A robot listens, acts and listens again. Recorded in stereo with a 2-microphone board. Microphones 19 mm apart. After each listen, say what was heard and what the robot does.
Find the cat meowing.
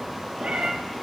Turn 90° right.
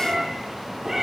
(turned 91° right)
So it is at 10° right. Turn 10° right.
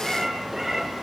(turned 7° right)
Facing the cat meowing.